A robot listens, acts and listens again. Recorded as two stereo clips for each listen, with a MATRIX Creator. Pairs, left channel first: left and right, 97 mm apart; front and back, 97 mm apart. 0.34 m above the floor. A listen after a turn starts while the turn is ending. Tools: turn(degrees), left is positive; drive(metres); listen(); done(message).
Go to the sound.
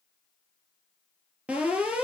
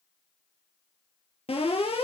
turn(degrees=-10)
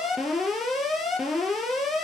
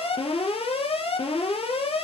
drive(metres=1.0)
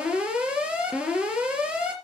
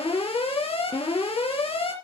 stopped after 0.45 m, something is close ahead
turn(degrees=-10)
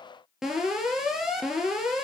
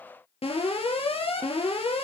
done("Blocked. The alarm is further on, straight ahead.")